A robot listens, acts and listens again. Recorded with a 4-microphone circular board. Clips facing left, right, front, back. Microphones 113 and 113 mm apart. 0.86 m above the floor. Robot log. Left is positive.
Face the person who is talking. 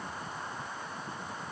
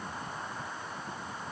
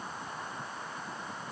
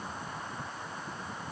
cmd idle
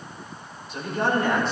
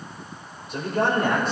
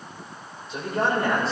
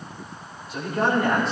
note: The man speaking: 55° right.
cmd yaw -55
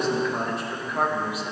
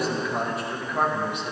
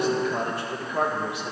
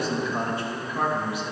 end: Found it: a man speaking, straight ahead, 2 to 4 m away.